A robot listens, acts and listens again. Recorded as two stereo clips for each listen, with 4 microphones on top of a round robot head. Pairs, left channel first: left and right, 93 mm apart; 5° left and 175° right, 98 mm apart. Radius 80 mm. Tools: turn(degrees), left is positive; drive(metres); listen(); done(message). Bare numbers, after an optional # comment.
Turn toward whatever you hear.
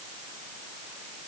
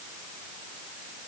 listen()
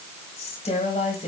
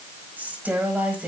# The woman speaking: 105° left.
turn(105)
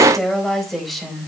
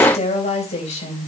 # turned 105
done("Found it: a woman speaking, straight ahead, 2 to 4 m away.")